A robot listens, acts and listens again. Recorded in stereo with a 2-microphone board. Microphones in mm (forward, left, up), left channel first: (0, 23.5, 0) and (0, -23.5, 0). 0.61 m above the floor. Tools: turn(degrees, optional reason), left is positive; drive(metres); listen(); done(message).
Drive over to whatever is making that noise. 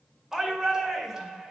turn(degrees=-30)
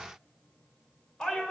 turn(degrees=15, reason="So it is at 15° left.")
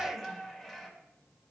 drive(metres=1.0)
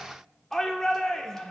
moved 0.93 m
turn(degrees=10, reason="The shout is now 10° left.")
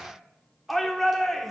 drive(metres=1.0)
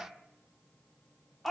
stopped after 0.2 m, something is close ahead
done("Arrived at the shout, straight ahead.")